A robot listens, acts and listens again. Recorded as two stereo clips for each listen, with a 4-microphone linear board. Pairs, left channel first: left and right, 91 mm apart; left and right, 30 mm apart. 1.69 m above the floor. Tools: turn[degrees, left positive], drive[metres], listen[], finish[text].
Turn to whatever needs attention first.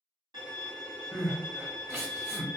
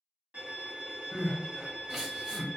Thought: The crying: about 25° right or 155° right.
Action: turn[-25]
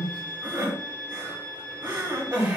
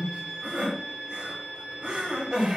Thought: So it is at 130° right.
Action: turn[-130]
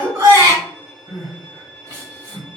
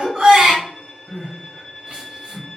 Thought: The crying is now 45° right.
Action: turn[-45]
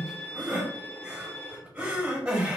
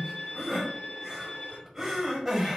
Thought: The crying is now 15° right.
Action: turn[-15]
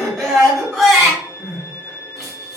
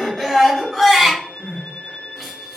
Action: finish[Facing the crying.]